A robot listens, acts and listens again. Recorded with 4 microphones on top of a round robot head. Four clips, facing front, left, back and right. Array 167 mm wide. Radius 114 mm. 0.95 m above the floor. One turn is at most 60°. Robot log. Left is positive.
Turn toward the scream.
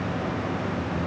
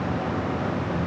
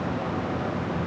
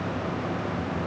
cmd idle
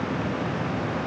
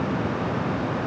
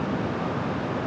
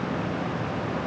cmd idle
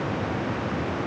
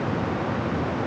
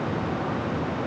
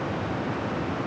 end: I can't make out a scream.